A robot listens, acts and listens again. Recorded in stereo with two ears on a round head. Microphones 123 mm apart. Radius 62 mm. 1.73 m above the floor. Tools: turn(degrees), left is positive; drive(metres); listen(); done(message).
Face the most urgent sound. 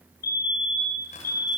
turn(degrees=65)
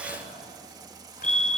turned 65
turn(degrees=10)
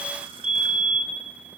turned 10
done("Facing the fire alarm, 2 to 4 m away.")